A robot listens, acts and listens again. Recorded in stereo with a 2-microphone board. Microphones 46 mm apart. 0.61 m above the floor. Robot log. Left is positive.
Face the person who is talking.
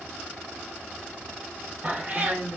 note: The woman speaking: about 60° right or 120° right.
cmd yaw -60
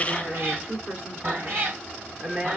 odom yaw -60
note: So it is at 40° right.
cmd yaw -40
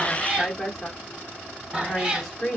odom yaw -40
note: The woman speaking is now 10° left.
cmd yaw +10
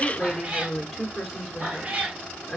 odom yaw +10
end: Facing the woman speaking, 1 to 2 m away.